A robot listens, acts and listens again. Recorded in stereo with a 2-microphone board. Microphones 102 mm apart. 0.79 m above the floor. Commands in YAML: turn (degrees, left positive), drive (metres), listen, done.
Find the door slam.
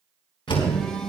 turn: 55
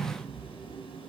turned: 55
listen: true
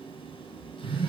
done: "I heard a door slam, but can't make it out now. It was about straight ahead or 70° left."